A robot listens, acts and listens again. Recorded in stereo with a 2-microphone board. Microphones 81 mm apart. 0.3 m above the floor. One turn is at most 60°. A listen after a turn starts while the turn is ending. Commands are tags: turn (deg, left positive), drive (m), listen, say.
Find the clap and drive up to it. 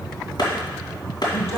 <turn deg="60"/>
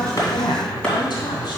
<listen/>
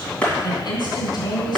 <turn deg="15"/>
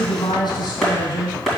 <drive m="1.0"/>
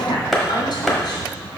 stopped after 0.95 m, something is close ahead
<say>I am next to the clap.</say>